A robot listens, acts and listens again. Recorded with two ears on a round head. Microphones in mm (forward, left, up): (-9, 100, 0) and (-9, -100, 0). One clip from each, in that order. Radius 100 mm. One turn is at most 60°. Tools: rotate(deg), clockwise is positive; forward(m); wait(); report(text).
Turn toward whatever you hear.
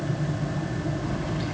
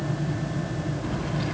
rotate(30)
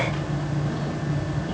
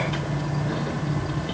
wait()
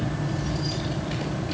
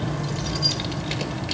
rotate(60)
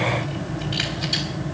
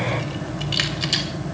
rotate(55)
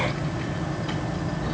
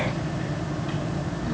wait()
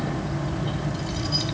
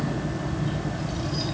rotate(-25)
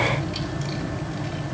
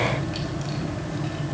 wait()
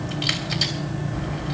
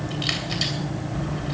report("Facing the keys jangling.")